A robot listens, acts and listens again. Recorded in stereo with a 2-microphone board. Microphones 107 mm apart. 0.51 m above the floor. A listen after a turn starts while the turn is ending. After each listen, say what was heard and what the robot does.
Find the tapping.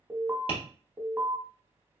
The tapping: about 60° left or 120° left. Turn 60° left.
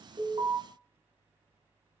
Keep listening.
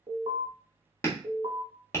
So it is at 30° left. Turn 30° left.
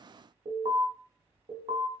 Keep listening.
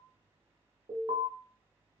Keep listening.
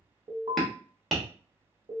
Facing the tapping.